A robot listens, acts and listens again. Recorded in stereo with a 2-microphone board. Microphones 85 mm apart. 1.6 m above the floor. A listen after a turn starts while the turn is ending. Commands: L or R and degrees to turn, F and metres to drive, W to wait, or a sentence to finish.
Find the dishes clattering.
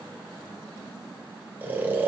W
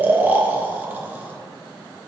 W
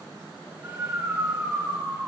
I can't make out dishes clattering to turn to.